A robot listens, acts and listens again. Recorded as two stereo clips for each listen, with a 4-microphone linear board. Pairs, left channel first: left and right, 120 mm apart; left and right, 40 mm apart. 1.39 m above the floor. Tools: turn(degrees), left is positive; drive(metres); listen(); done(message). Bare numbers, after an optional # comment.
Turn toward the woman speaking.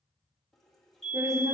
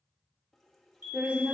# The woman speaking: about 25° right or 155° right.
turn(-25)
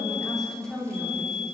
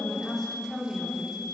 # So it is at 10° left.
turn(10)
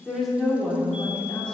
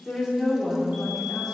# The woman speaking is now 10° left.
turn(10)
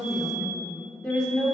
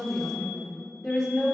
# The woman speaking is now 10° left.
turn(10)
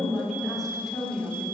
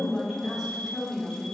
done("Found it: a woman speaking, straight ahead, 2 to 4 m away.")